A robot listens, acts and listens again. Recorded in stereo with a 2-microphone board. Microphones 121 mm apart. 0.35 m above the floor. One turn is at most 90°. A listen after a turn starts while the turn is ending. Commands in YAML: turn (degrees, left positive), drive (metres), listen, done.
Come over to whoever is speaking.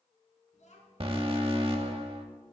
turn: 90
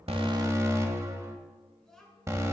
drive: 1.0
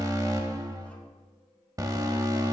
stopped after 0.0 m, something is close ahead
listen: true
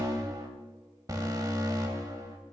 listen: true
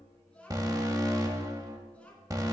turn: 10
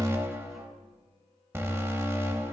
listen: true
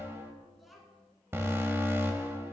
done: "Something is in my way. I am facing the child speaking but have not reached it."